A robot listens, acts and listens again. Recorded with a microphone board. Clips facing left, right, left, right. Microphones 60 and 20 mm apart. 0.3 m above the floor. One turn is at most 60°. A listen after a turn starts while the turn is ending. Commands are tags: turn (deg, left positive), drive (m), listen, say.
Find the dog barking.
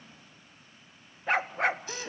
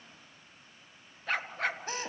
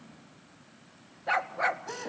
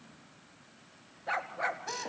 <turn deg="20"/>
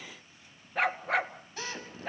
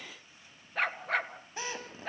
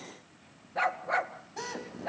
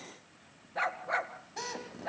<say>Found it: a dog barking, straight ahead, 2 to 4 m away.</say>